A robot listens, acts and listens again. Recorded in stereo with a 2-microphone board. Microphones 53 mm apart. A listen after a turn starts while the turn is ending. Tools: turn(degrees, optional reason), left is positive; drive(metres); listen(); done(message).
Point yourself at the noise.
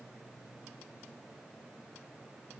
listen()
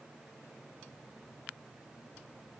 listen()
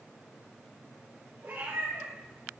turn(degrees=-60, reason="The cat meowing: about 60° right or 120° right.")
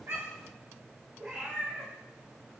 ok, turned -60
turn(degrees=-15, reason="So it is at 15° right.")
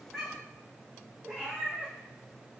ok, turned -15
done("Found it: a cat meowing, straight ahead.")